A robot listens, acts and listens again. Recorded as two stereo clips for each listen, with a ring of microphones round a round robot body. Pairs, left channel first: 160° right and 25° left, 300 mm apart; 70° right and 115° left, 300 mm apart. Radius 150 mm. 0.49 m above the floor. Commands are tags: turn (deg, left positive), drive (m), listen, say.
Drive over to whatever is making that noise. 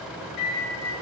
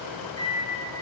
<turn deg="-145"/>
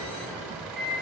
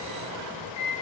<turn deg="-35"/>
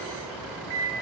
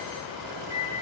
<drive m="1.0"/>
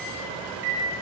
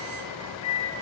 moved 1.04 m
<drive m="1.0"/>
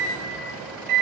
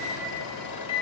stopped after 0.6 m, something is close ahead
<say>I am next to the microwave.</say>